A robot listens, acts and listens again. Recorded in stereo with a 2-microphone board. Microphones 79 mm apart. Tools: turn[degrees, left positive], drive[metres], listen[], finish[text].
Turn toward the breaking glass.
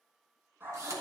Action: listen[]
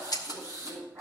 Thought: The breaking glass: about 60° left or 120° left.
Action: turn[60]
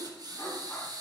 Action: listen[]
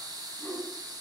Action: finish[I heard breaking glass, but can't make it out now. It was about straight ahead or 60° left.]